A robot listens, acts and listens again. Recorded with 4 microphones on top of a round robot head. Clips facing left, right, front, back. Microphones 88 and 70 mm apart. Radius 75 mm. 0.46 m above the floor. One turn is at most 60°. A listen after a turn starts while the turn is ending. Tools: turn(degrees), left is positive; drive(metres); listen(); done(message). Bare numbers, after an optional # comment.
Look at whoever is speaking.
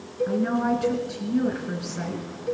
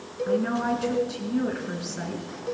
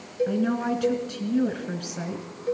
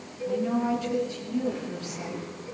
done("Found it: a woman speaking, straight ahead.")